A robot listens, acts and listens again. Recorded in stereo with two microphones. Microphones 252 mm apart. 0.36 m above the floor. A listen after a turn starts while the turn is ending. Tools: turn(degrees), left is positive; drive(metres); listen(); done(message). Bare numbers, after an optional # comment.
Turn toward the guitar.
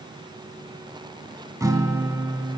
turn(-30)
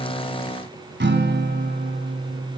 # So it is at 135° right.
turn(-135)
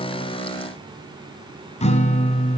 # The guitar is now 25° left.
turn(25)
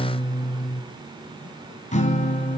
# The guitar is now 30° left.
turn(30)
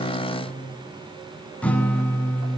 done("Facing the guitar, 1 to 2 m away.")